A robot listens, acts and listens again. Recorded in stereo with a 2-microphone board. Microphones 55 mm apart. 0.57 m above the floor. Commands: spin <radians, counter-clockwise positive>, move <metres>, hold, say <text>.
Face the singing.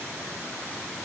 hold
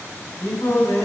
spin 1.57
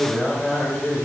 say Found it: singing, straight ahead, 1 to 2 m away.